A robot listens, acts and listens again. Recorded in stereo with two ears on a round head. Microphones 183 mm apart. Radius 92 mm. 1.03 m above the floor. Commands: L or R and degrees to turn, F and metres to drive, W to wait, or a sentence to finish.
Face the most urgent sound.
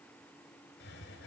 W
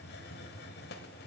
W
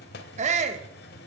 R40
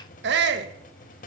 R100
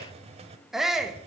Facing the shout, 1 to 2 m away.